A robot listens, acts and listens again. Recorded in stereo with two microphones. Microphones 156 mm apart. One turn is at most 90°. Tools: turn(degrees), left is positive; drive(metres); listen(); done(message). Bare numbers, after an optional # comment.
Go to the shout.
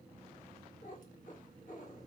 listen()
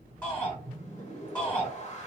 turn(30)
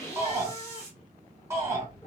# So it is at 15° right.
turn(-15)
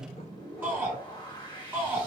# The shout is now 10° right.
turn(-10)
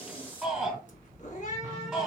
drive(1.0)
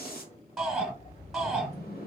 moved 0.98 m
drive(1.0)
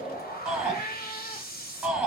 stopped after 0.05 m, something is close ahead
done("Arrived at the shout, straight ahead.")